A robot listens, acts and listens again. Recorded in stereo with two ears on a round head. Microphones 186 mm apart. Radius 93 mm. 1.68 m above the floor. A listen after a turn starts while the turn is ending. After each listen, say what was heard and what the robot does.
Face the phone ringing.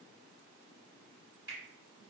Keep listening.
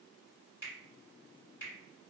Keep listening.
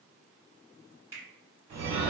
The phone ringing: about 50° right or 130° right. Turn 50° right.
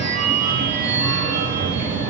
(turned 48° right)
So it is at 15° right. Turn 15° right.
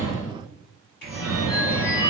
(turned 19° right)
Facing the phone ringing.